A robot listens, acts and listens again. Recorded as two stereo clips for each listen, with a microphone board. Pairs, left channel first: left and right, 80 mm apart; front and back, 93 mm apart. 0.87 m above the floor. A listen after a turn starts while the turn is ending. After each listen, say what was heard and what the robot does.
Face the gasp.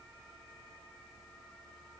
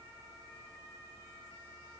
Keep listening.
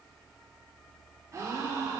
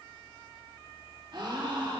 The gasp: 140° right. Turn 140° right.
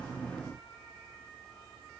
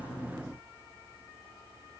I heard a gasp from this way, but can't make it out now.